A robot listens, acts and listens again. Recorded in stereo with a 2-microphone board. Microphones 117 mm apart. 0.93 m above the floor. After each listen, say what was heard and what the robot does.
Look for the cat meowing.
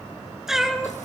Turn 30° right.
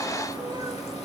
Keep listening.
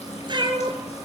So it is at 140° right. Turn 140° right.
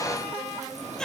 Keep listening.
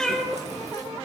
Found it: a cat meowing, straight ahead.